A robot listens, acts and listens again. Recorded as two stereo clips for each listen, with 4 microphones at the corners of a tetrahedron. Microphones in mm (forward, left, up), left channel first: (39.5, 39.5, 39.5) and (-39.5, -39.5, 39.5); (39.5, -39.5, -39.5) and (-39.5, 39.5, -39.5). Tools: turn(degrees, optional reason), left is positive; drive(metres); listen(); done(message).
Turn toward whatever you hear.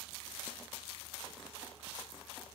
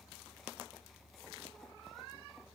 listen()
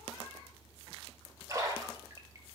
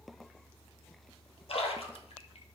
turn(degrees=-75, reason="The splash: 75° right.")
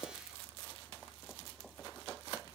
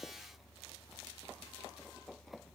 done("I heard a splash from this way, but can't make it out now.")